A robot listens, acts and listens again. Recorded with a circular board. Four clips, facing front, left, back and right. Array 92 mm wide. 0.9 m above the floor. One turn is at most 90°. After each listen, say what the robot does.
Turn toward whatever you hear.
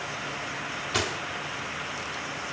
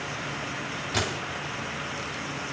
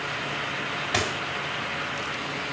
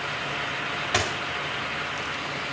Turn 90° right.
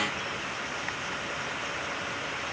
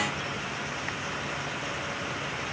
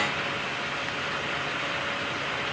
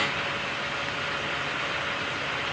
Turn 30° right.
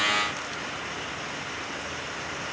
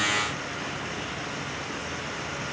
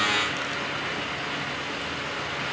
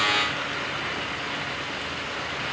I heard a dropped coin from this way, but can't make it out now.